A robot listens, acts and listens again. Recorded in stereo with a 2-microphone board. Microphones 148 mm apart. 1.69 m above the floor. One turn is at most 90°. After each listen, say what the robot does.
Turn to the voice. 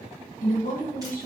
Turn 60° left.
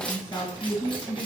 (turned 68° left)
Turn 20° left.
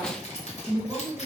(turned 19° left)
Found it: a woman speaking, straight ahead, 1 to 2 m away.